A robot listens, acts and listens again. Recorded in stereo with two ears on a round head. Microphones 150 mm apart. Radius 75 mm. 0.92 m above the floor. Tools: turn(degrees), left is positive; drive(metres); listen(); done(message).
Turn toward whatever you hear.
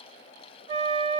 turn(degrees=-30)
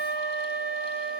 done("Facing the flute, under 1 m away.")